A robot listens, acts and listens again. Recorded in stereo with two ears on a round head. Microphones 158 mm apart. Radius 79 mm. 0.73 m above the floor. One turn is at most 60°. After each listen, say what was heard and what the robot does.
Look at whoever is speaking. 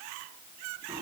Keep listening.
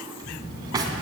The child speaking: about 60° left or 120° left. Turn 60° left.
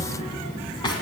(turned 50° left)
So it is at 10° left. Turn 10° left.
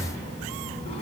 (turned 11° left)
Found it: a child speaking, straight ahead.